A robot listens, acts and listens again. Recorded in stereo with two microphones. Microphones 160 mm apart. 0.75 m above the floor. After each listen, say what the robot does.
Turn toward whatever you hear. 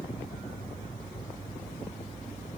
Keep listening.
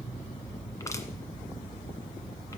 Keep listening.
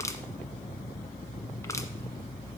Turn 20° left.
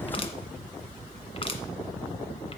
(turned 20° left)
Turn 140° left.
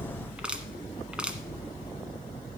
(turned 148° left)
Turn 10° right.
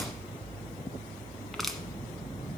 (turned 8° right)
Facing the crushing, 1 to 2 m away.